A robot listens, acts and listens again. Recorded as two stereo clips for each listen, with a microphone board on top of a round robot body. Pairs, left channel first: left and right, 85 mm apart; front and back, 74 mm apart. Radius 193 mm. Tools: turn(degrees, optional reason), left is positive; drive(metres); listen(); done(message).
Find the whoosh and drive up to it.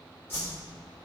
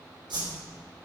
turn(degrees=160, reason="The whoosh: 160° left.")
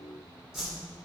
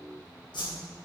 drive(metres=1.0)
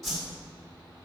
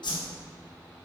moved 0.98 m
drive(metres=1.0)
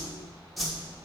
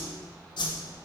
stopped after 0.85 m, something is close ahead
done("I am next to the whoosh.")